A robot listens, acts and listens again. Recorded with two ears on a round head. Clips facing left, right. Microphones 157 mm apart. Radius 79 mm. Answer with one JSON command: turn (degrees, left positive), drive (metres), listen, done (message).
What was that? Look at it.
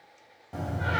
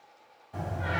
{"turn": 90}
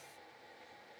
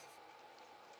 {"done": "I heard a door slam from this way, but can't make it out now."}